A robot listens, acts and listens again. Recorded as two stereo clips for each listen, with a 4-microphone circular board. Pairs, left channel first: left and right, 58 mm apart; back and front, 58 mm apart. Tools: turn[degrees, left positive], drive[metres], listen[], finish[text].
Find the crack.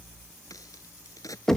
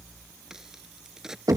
Thought: The crack: 80° left.
Action: turn[80]
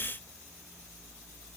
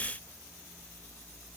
Action: finish[I heard a crack from this way, but can't make it out now.]